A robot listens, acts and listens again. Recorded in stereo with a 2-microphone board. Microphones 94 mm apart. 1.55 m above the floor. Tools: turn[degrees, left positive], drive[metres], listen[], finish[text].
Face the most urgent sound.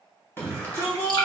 Thought: The shout: about 25° left or 155° left.
Action: turn[25]
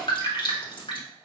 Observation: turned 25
Action: listen[]
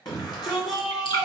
Thought: So it is at 130° left.
Action: turn[130]
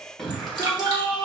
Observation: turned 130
Action: finish[Found it: a shout, straight ahead, 1 to 2 m away.]